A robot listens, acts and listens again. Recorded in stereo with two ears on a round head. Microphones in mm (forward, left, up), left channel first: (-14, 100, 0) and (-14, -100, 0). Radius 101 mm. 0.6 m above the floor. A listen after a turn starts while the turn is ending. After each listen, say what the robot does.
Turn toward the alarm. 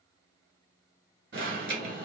Turn 55° right.
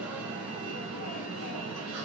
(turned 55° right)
Turn 70° right.
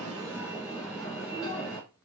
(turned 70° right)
Found it: an alarm, straight ahead, 1 to 2 m away.